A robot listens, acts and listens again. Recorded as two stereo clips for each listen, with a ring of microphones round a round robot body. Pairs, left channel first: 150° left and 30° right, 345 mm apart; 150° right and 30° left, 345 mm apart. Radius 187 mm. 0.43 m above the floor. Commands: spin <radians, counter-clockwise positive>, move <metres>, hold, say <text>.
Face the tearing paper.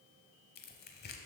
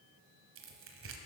spin 1.48
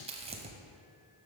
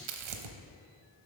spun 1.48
spin 0.79
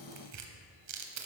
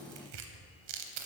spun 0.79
spin 0.26
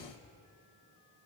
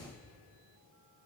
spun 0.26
hold
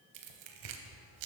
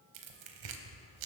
say Facing the tearing paper.